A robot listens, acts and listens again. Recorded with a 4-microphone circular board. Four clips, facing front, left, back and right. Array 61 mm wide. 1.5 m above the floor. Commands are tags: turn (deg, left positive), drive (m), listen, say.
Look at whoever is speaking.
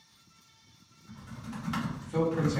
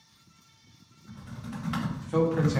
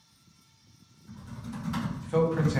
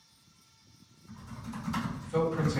<turn deg="155"/>
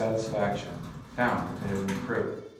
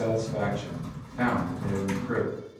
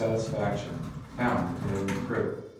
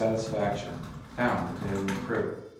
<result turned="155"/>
<turn deg="-15"/>
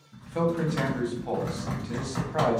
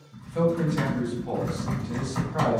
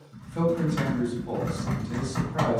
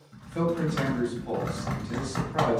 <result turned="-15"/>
<say>Facing the man speaking, 1 to 2 m away.</say>